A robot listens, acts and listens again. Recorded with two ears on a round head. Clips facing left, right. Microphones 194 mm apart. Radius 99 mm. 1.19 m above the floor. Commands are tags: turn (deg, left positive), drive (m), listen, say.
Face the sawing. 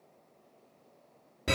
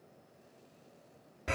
<listen/>
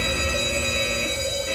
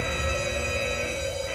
<listen/>
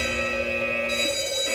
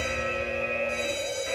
<say>I can't make out sawing, only a fire alarm.</say>